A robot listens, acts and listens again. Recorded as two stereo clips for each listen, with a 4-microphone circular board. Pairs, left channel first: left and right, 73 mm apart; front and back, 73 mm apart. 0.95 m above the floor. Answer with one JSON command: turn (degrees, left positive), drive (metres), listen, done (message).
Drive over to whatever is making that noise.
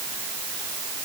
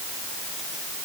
{"listen": true}
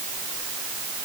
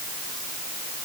{"listen": true}
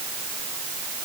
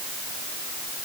{"done": "I can't make out anything to turn to."}